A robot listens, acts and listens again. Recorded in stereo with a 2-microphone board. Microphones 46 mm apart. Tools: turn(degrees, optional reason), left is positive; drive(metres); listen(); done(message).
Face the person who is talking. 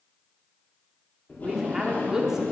turn(degrees=-30)
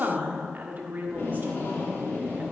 turn(degrees=-140, reason="So it is at 140° right.")
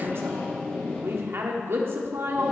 turn(degrees=-60, reason="The woman speaking is now 60° right.")
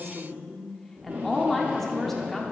done("Found it: a woman speaking, straight ahead, 1 to 2 m away.")